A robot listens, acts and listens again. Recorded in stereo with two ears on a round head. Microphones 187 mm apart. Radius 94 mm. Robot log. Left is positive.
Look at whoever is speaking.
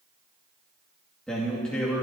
cmd yaw +30
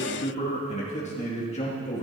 note: So it is at 145° left.
cmd yaw +145
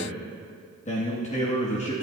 note: The man speaking is now 35° left.
cmd yaw +35
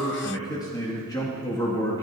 note: The man speaking is now 20° left.
cmd yaw +20
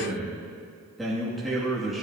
end: Facing the man speaking.